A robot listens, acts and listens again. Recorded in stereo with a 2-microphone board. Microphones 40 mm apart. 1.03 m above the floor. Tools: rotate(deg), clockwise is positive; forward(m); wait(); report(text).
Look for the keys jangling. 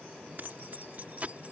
rotate(35)
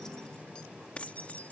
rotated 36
rotate(-40)
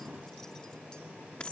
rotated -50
rotate(-30)
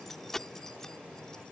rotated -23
rotate(-15)
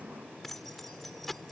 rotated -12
rotate(-10)
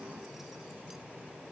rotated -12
wait()
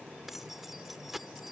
report("Facing the keys jangling.")